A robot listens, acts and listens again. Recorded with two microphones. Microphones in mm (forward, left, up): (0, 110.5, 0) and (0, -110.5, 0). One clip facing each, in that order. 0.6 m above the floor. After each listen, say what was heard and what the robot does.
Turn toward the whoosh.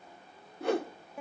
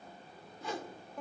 The whoosh: about 65° left or 115° left. Turn 65° left.
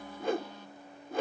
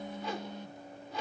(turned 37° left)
So it is at 60° left. Turn 60° left.
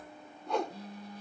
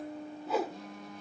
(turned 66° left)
Facing the whoosh, 1 to 2 m away.